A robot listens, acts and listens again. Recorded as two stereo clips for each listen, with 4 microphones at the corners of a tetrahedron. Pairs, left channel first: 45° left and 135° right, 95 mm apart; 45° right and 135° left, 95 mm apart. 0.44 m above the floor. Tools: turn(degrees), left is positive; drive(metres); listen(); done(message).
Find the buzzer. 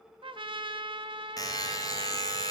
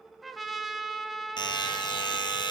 done("Facing the buzzer, 2 to 4 m away.")